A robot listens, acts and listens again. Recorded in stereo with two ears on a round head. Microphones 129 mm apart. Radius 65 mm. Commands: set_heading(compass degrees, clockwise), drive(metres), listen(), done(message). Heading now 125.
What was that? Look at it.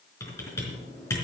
set_heading(105)
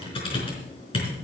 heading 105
set_heading(325)
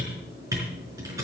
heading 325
set_heading(350)
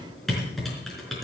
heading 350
done("Facing the typing on a keyboard.")